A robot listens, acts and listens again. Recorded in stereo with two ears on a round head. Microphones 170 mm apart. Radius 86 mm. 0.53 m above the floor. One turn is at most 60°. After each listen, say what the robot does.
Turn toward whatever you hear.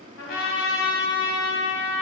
Turn 60° left.
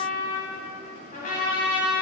Turn 45° left.
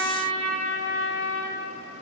Turn 15° left.
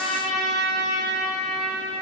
Found it: a trumpet, straight ahead.